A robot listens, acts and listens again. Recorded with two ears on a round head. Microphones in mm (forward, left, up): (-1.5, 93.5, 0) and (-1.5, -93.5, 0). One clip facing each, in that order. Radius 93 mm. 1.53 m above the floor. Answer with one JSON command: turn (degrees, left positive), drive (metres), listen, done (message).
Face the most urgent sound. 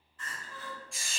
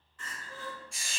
{"turn": -60}
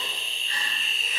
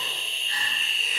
{"listen": true}
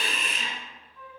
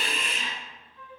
{"listen": true}
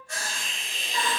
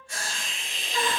{"turn": -30}
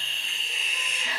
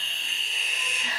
{"listen": true}
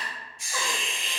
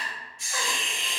{"turn": 15}
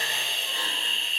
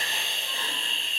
{"listen": true}
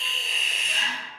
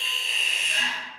{"listen": true}
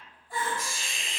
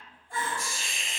{"done": "Found it: crying, straight ahead."}